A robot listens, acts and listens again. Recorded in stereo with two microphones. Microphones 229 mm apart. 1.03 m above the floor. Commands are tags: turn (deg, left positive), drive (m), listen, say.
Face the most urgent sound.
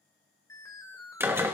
<turn deg="30"/>
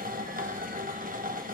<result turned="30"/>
<listen/>
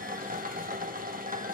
<listen/>
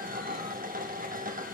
<say>I heard an alarm, but can't make it out now. It was about 15° right or 135° left.</say>